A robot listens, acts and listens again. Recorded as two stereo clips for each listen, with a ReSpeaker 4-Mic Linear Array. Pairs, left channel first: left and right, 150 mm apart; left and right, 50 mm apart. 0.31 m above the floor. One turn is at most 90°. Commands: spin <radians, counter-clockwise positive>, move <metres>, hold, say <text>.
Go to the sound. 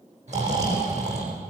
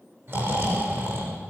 spin -0.87
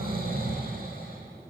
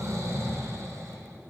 spin -1.48
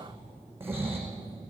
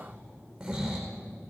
spin -0.26
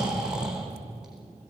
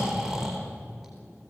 move 1.0
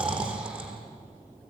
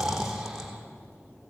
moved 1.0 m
move 1.0
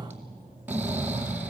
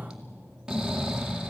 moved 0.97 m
spin -0.17
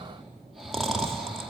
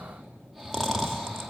move 1.0
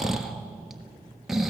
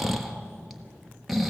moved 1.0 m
move 1.0
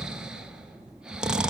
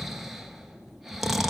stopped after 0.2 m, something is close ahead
say Arrived at the snoring, straight ahead.